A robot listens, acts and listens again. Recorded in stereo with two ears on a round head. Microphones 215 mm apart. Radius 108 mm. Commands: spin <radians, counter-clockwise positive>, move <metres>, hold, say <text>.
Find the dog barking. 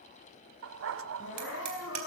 spin -1.05
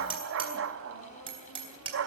spin -1.05
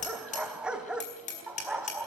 say Facing the dog barking, 1 to 2 m away.